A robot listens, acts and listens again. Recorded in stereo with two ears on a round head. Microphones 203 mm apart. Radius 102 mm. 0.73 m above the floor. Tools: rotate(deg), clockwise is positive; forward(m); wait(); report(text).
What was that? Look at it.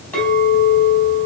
rotate(-30)
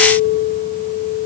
rotate(25)
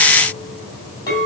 rotate(-15)
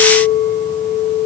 report("Facing the clink.")